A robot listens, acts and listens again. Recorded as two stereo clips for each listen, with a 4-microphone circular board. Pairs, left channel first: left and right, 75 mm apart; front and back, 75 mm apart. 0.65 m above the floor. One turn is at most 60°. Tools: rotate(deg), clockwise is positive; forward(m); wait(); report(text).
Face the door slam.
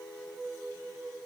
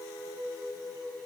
wait()
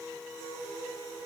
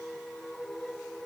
wait()
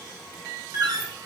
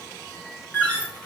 rotate(60)
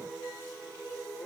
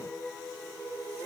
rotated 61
rotate(10)
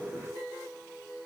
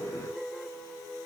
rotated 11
report("Facing where the door slam came from. I can't hear it now.")